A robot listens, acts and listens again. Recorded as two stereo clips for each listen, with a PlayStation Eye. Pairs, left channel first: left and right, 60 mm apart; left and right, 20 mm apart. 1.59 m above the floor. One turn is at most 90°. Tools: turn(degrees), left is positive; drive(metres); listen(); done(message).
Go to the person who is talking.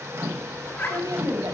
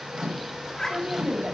turn(degrees=-90)
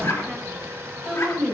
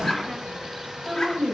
drive(metres=1.0)
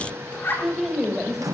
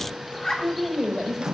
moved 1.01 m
drive(metres=1.0)
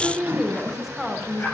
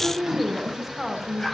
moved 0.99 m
drive(metres=1.0)
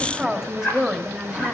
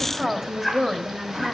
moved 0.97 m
turn(degrees=-10)
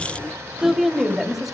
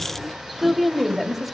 drive(metres=1.0)
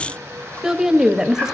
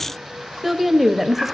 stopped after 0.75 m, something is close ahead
turn(degrees=-10)
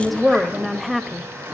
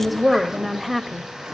done("Arrived at the woman speaking, straight ahead.")